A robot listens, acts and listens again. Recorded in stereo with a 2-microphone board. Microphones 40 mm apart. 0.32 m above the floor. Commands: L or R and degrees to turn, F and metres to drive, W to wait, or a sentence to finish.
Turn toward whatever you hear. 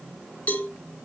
L40
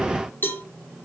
L95
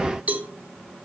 R40
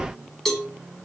L10
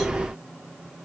W
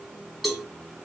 Facing the cowbell, 2 to 4 m away.